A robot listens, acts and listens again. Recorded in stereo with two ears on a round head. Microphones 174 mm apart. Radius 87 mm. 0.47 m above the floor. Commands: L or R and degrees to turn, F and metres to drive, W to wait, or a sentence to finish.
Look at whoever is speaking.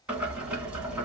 W
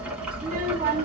R55
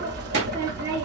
R65
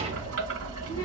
R35
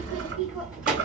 Found it: a child speaking, straight ahead, 1 to 2 m away.